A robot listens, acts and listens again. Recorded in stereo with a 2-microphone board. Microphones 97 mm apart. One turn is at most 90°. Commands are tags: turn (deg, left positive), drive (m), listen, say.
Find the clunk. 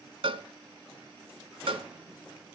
<listen/>
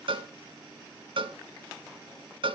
<listen/>
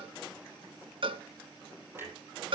<turn deg="-25"/>
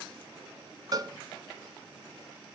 <listen/>
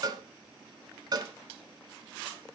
<say>I heard a clunk, but can't make it out now. It was about straight ahead or 130° right.</say>